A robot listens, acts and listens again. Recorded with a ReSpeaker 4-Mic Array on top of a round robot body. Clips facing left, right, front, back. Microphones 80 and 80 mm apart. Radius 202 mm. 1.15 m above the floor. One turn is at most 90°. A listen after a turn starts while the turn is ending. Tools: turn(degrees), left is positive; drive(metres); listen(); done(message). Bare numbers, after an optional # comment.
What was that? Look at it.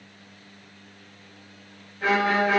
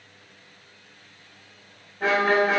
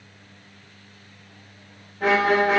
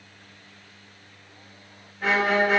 # The violin: 40° right.
turn(-40)
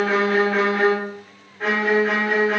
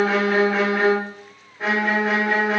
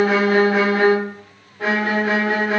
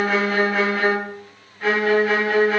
done("Facing the violin.")